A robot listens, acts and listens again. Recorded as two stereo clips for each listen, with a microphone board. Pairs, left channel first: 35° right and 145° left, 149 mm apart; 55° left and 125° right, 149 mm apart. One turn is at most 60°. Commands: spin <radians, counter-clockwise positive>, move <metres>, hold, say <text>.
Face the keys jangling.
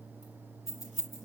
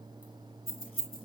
spin 0.96
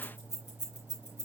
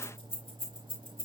say Found it: keys jangling, straight ahead, 2 to 4 m away.